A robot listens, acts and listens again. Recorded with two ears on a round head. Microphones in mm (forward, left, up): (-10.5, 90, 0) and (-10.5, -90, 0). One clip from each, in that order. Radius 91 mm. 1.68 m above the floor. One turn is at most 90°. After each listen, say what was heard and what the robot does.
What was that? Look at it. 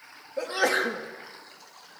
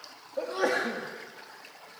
The sneeze: about 55° left or 125° left. Turn 55° left.
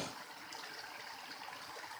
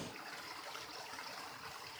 Keep listening.
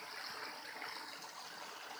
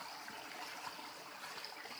I heard a sneeze, but can't make it out now. It was about straight ahead or 70° left.